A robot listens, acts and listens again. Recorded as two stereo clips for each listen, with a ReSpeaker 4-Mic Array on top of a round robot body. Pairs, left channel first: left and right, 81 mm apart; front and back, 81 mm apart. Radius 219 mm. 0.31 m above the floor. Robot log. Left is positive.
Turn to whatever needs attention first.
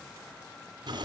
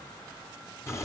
cmd idle
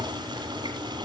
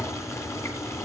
cmd idle
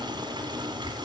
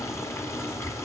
end: I can't make out anything urgent, only boiling.